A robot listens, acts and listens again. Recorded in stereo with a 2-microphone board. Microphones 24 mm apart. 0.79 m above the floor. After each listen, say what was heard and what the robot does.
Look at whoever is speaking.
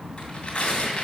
Keep listening.
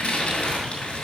Keep listening.
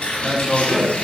Turn 30° right.
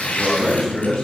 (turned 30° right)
So it is at 25° left. Turn 25° left.
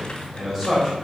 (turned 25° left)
The man speaking is now 15° right. Turn 15° right.
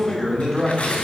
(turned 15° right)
Found it: a man speaking, straight ahead, over 4 m away.